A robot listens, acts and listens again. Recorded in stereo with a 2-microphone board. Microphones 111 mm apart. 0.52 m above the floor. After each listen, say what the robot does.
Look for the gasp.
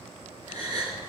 Turn 35° right.
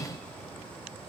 Keep listening.
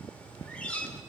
I heard a gasp, but can't make it out now. It was about straight ahead or 110° right.